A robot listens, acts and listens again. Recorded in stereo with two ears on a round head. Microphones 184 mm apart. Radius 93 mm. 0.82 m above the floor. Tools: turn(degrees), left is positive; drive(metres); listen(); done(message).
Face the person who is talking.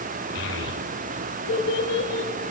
turn(degrees=60)
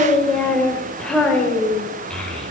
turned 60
done("Found it: a child speaking, straight ahead, 2 to 4 m away.")